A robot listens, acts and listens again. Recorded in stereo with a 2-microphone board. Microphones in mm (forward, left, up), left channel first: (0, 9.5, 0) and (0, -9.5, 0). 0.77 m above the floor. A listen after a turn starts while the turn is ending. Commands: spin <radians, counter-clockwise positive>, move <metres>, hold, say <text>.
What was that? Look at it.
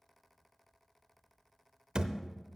spin -0.87
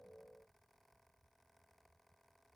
hold
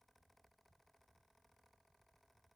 say I heard a thud, but can't make it out now. It was about straight ahead or 80° right.